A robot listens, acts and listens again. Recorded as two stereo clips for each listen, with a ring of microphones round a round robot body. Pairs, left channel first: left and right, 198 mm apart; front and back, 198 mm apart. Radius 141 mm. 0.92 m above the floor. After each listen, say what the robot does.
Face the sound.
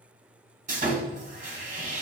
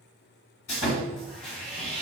Turn 40° right.
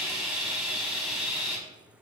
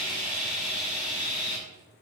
Found it: sawing, straight ahead.